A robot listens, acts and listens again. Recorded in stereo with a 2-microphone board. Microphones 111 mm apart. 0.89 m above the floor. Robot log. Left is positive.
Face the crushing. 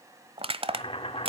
note: The crushing: about 55° right or 125° right.
cmd yaw -55
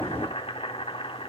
cmd idle
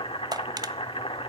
note: So it is at 45° right.
cmd yaw -45
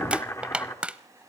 note: The crushing is now 10° right.
cmd yaw -10
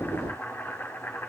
cmd idle
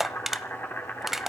end: Found it: crushing, straight ahead, 1 to 2 m away.